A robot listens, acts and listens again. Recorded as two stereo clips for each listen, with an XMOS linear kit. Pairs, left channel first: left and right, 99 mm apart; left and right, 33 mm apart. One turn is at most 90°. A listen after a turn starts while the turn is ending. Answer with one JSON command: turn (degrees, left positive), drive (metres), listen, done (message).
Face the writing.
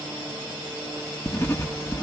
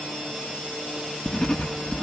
{"turn": 25}
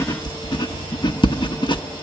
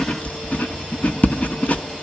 {"turn": 90}
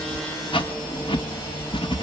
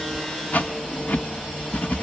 {"turn": 60}
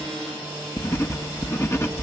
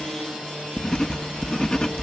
{"turn": 25}
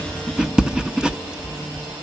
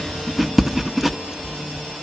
{"turn": -10}
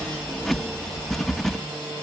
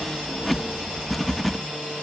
{"done": "Found it: writing, straight ahead, 1 to 2 m away."}